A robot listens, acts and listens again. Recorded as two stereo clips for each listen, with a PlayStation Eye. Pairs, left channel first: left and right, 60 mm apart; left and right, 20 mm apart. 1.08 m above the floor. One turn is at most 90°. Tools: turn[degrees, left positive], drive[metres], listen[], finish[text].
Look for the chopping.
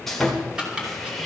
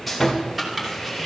Action: turn[-30]
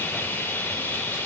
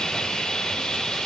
Action: listen[]
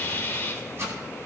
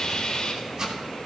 Thought: So it is at 135° right.
Action: turn[-90]
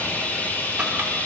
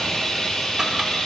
Thought: Nothing new. It was at 45° right.
Action: turn[-45]
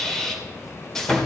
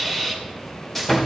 Action: listen[]
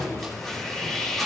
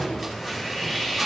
Action: finish[Facing where the chopping came from. I can't hear it now.]